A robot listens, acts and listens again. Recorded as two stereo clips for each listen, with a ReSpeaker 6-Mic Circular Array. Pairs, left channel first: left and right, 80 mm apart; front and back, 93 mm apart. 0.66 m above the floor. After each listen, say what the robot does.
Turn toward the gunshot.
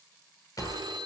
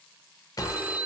Turn 50° left.
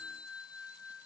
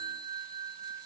Facing where the gunshot came from. I can't hear it now.